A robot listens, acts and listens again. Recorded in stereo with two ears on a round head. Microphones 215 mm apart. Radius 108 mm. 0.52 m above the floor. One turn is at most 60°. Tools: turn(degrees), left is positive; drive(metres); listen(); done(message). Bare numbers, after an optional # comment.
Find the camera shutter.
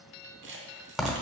# The camera shutter: about 50° right or 130° right.
turn(-50)
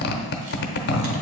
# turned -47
listen()
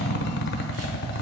listen()
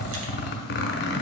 done("I heard a camera shutter, but can't make it out now. It was about 5° right or 80° right.")